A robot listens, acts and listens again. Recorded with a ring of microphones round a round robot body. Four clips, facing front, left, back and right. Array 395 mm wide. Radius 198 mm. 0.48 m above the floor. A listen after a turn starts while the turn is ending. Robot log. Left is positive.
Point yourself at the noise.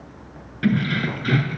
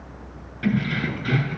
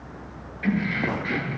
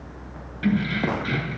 end: Found it: keys jangling, straight ahead, over 4 m away.